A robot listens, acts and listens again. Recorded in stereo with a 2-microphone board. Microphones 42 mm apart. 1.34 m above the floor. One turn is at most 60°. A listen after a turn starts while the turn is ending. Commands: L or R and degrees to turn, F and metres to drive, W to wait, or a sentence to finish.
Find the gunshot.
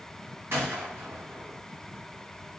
R60
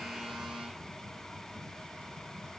W
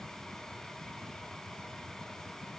I heard a gunshot, but can't make it out now. It was about 5° right or 55° right.